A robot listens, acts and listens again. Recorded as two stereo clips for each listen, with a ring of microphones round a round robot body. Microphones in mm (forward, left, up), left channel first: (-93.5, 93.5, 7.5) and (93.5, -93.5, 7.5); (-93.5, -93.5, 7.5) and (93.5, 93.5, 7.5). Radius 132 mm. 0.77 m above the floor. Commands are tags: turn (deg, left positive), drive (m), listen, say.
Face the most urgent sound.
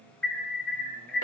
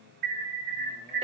<turn deg="50"/>
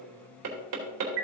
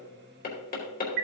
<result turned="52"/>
<say>Found it: an alarm, straight ahead, 1 to 2 m away.</say>